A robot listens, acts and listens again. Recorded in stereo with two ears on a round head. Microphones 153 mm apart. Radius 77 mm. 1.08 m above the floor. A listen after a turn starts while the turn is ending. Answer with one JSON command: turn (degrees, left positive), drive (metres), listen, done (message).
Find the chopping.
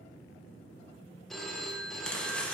{"turn": 30}
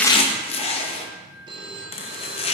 {"turn": 145}
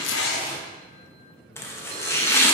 {"turn": 15}
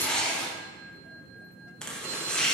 {"done": "Facing the chopping."}